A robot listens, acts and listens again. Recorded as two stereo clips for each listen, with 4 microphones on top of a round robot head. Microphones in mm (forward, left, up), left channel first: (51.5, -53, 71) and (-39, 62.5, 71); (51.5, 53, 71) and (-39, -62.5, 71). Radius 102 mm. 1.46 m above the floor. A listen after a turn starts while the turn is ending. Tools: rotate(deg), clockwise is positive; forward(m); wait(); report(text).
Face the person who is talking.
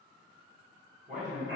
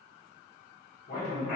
rotate(-90)
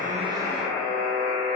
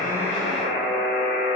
wait()
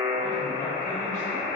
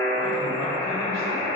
wait()
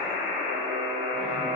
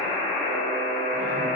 report("Facing where the man speaking came from. I can't hear it now.")